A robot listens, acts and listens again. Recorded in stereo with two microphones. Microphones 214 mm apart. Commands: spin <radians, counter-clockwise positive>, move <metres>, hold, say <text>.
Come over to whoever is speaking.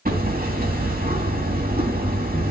hold
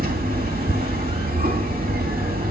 hold
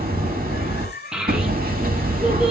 spin -0.52
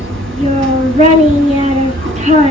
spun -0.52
spin -2.53
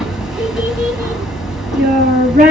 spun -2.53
spin -0.79
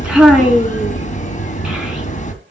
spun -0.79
move 1.0
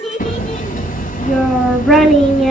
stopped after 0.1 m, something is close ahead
say Something is in my way. I am facing the child speaking but have not reached it.